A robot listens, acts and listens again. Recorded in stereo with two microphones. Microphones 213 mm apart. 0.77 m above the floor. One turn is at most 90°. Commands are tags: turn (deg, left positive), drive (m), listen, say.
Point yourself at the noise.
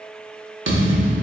<turn deg="-65"/>
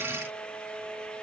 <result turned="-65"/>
<listen/>
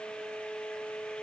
<say>I heard a thud, but can't make it out now. It was about straight ahead or 50° right.</say>